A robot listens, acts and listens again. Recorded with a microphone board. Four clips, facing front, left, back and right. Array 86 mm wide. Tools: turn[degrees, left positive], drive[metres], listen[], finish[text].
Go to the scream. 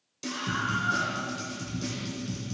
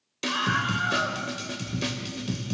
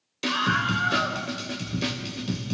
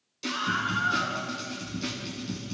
Thought: The scream: 135° left.
Action: turn[135]
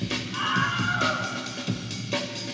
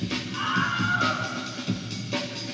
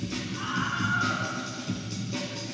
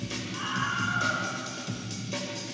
Thought: The scream is now 15° left.
Action: turn[15]
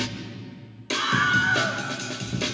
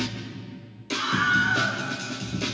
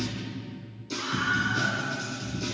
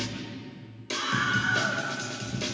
Action: drive[1.0]
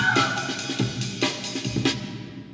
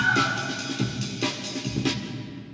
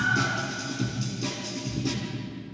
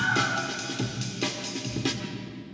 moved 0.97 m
Action: drive[1.0]
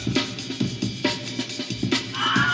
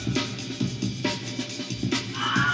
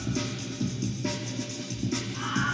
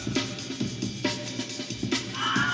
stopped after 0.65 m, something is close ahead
Action: finish[I am next to the scream.]